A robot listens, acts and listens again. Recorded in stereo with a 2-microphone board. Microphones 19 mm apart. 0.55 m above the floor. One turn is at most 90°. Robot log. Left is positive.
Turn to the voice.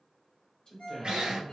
note: The man speaking: about 40° left or 140° left.
cmd yaw +40
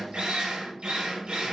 cmd idle
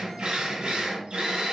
cmd idle
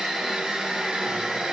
end: I heard a man speaking, but can't make it out now. It was about straight ahead or 100° left.